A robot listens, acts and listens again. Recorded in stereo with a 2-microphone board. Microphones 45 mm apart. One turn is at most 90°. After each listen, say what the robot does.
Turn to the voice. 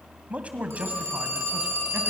Turn 30° right.
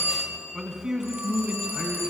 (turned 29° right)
Turn 15° right.
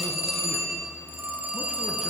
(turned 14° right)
Keep listening.
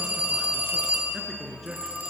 Facing the man speaking, over 4 m away.